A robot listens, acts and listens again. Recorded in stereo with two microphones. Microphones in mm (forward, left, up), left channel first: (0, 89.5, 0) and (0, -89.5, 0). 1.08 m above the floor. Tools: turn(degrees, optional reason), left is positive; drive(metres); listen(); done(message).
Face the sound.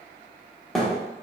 turn(degrees=30)
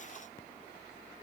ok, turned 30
listen()
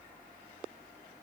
done("I heard a thud, but can't make it out now. It was about 30° right or 150° left.")